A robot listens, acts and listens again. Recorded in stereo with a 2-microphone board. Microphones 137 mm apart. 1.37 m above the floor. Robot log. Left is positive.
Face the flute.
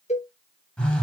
cmd idle
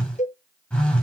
cmd idle
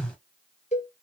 end: I can't make out a flute, only a cowbell and a phone buzzing.